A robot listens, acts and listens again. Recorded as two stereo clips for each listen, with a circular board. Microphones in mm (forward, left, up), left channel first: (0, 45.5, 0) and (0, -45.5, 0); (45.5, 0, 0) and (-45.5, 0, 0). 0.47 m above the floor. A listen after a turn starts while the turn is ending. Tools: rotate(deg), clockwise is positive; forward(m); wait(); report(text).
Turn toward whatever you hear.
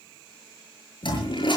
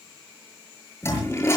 rotate(-60)
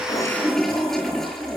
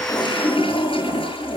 report("Found it: a toilet flushing, straight ahead, over 4 m away.")